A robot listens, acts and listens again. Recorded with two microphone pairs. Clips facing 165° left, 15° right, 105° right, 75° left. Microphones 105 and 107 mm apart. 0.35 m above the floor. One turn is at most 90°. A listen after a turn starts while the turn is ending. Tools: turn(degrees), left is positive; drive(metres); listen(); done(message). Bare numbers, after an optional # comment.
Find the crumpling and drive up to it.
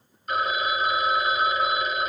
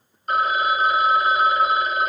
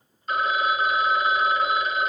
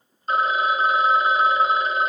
listen()
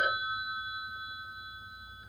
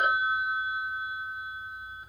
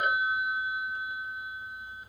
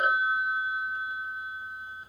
listen()
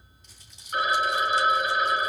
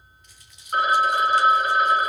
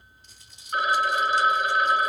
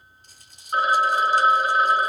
# The crumpling: 110° left.
turn(90)
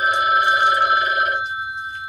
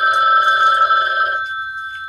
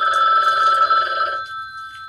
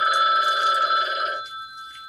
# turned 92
# Nothing new. It was at 15° left.
turn(15)
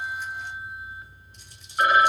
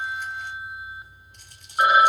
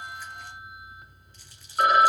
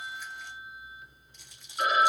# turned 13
listen()
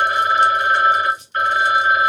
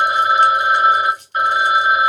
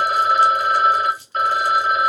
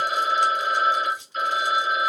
drive(1.0)
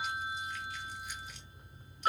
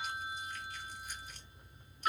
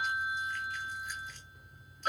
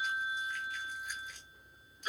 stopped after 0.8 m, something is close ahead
listen()
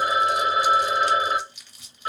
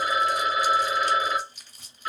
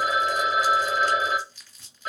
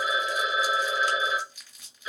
done("I am next to the crumpling.")